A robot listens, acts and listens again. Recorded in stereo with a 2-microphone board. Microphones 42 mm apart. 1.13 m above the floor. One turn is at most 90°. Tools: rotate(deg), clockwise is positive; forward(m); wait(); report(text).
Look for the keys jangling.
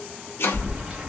rotate(15)
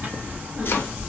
rotate(90)
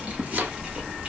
rotate(35)
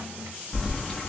report("Facing the keys jangling, under 1 m away.")